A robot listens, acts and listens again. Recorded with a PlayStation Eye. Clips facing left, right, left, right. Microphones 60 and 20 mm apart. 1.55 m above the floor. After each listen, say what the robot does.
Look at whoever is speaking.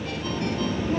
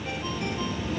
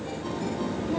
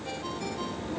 Turn 40° left.
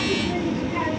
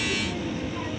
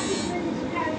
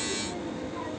Turn 100° left.
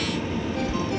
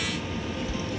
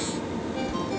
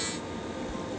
Turn 30° left.
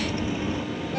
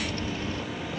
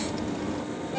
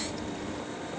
Turn 15° left.
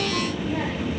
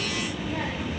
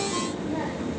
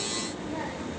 Facing the child speaking.